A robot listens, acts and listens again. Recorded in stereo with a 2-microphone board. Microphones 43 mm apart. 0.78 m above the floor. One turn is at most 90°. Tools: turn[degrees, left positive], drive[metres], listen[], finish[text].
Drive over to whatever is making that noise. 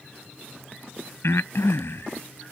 Action: turn[90]
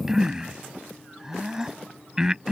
Thought: So it is at 15° right.
Action: turn[-15]
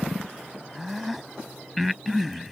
Action: drive[1.0]
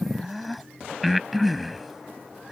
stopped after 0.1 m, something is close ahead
Action: finish[Something is in my way. I am facing the breathing but have not reached it.]